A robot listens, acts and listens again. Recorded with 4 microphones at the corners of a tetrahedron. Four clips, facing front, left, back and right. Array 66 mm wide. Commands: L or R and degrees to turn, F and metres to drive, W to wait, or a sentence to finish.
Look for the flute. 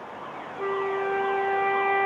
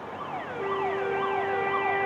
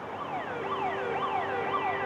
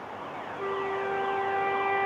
R10
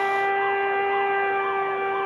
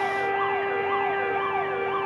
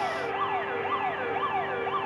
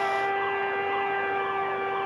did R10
Facing the flute.